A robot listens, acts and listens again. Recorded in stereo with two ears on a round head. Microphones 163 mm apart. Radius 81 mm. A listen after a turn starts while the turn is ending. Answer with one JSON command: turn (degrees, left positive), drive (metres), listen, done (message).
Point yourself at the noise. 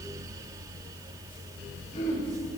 {"turn": 40}
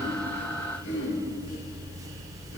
{"turn": 100}
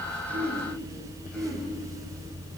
{"done": "Found it: throat clearing, straight ahead."}